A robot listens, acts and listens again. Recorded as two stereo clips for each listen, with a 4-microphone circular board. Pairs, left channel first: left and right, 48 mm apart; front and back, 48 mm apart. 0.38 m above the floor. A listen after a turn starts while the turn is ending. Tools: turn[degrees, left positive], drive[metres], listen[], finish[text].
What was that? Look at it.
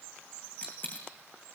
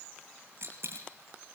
Thought: The dropped coin: 145° left.
Action: turn[145]
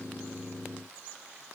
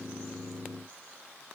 Action: finish[I heard a dropped coin from this way, but can't make it out now.]